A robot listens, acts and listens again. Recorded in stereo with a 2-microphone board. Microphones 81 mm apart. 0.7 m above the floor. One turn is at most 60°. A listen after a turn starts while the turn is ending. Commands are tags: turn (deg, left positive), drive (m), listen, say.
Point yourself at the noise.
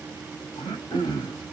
<turn deg="60"/>
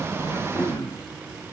<turn deg="60"/>
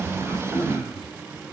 <turn deg="-15"/>
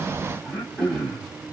<say>Found it: throat clearing, straight ahead.</say>